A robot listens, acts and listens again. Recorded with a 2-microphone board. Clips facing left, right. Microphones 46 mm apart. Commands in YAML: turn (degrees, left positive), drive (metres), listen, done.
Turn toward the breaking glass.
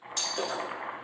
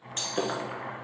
turn: -35
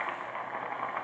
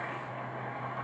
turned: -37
listen: true
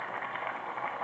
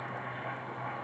done: "I heard breaking glass, but can't make it out now. It was about 5° left or 110° right."